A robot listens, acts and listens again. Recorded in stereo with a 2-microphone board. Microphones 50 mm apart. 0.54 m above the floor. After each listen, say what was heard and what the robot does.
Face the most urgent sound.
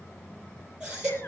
The baby crying: about 15° right or 165° right. Turn 15° right.
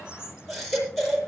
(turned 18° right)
Facing the baby crying, over 4 m away.